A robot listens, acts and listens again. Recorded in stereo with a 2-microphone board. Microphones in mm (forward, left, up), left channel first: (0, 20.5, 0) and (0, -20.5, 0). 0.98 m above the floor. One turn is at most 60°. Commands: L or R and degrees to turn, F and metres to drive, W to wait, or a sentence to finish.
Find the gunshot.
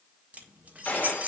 L40
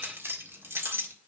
W
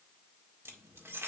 I heard a gunshot, but can't make it out now. It was about straight ahead or 100° left.